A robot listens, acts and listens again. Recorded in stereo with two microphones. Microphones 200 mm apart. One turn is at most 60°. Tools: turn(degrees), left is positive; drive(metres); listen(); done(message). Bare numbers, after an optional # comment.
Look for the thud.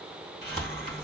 turn(30)
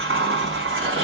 listen()
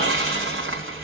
done("I heard a thud, but can't make it out now. It was about 30° right or 150° left.")